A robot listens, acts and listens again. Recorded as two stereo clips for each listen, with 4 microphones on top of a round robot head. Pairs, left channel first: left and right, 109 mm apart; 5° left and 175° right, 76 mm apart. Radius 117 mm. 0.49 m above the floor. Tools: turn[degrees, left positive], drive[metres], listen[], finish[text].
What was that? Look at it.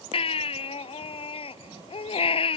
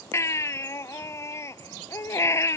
Thought: The baby crying: 55° left.
Action: turn[55]
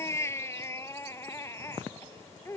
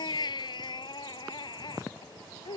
Thought: The baby crying is now 25° left.
Action: turn[25]
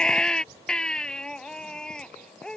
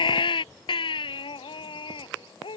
Action: finish[Facing the baby crying.]